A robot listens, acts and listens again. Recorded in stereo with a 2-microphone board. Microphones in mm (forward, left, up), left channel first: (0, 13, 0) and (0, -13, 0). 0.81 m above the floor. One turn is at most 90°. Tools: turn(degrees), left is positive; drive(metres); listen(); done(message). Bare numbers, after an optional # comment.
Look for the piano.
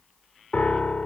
# The piano: about 65° left or 115° left.
turn(65)
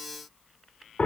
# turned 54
# So it is at 60° left.
turn(60)
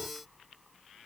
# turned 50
# Nothing new. It was at 10° left.
turn(10)
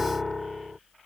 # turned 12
done("Found it: a piano, straight ahead.")